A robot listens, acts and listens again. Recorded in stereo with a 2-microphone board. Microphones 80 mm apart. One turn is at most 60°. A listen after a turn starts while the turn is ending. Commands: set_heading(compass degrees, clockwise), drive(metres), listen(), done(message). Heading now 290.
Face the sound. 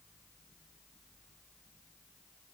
listen()
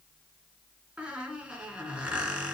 set_heading(320)
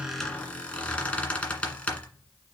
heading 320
set_heading(305)
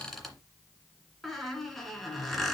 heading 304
done("Found it: a squeak, straight ahead.")